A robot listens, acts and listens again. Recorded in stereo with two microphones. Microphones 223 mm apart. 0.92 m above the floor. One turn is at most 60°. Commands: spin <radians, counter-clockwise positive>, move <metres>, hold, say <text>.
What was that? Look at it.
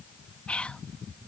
spin 0.52
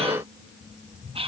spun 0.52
spin -0.44
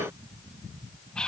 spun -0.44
say Found it: whispering, straight ahead.